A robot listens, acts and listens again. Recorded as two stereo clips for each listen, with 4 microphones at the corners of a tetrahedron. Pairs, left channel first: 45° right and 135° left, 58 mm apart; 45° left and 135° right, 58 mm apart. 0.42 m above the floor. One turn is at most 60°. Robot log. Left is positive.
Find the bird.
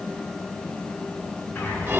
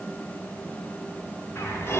end: Found it: a bird, straight ahead.